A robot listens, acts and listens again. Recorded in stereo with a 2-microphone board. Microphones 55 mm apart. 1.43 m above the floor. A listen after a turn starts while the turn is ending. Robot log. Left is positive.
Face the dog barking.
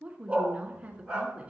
cmd yaw -30
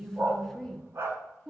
note: So it is at 130° right.
cmd yaw -130
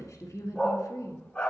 note: The dog barking is now 20° left.
cmd yaw +20
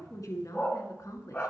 note: The dog barking is now 20° left.
cmd yaw +20
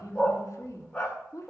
note: The dog barking is now 10° left.
cmd yaw +10
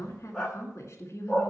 end: Facing the dog barking.